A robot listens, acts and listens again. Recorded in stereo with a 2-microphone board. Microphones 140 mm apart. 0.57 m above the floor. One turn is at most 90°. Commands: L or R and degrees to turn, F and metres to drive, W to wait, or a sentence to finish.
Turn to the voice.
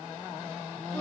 W
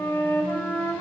W
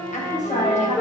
L55
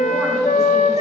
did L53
W
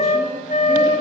W
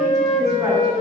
I heard a woman speaking, but can't make it out now. It was about 5° left or 70° left.